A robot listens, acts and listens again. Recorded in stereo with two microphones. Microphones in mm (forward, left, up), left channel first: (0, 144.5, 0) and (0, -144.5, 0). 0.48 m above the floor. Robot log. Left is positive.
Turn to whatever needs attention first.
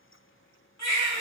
note: The baby crying: about 65° left or 115° left.
cmd yaw +65
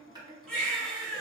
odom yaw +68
end: Found it: a baby crying, straight ahead.